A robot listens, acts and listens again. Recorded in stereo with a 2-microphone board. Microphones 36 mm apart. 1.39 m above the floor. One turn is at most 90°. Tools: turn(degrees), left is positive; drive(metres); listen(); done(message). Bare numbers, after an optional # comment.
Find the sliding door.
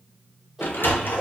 # The sliding door: about 75° left or 105° left.
turn(75)
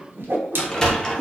# So it is at 20° left.
turn(20)
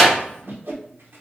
done("Facing the sliding door, under 1 m away.")